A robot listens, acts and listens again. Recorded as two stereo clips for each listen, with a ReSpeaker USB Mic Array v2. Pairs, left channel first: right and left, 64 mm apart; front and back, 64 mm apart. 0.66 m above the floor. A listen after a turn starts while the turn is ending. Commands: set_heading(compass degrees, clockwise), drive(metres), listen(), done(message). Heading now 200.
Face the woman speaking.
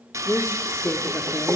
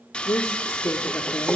set_heading(255)
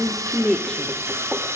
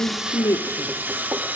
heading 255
set_heading(270)
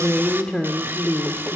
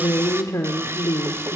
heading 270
set_heading(295)
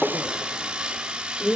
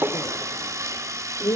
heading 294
set_heading(309)
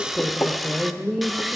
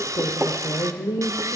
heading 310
done("Found it: a woman speaking, straight ahead, 2 to 4 m away.")